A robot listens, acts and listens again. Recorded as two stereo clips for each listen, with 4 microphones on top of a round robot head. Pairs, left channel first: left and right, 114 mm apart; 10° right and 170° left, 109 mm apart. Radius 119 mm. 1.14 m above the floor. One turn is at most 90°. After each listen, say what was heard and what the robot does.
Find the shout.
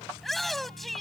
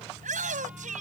The shout: straight behind. Turn 90° left.
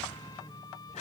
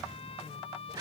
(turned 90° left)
The shout is now 115° left. Turn 90° left.
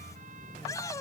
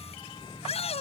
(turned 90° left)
The shout is now 20° left. Turn 20° left.
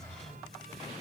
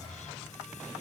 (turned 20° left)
Keep listening.
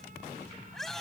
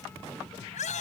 Facing the shout.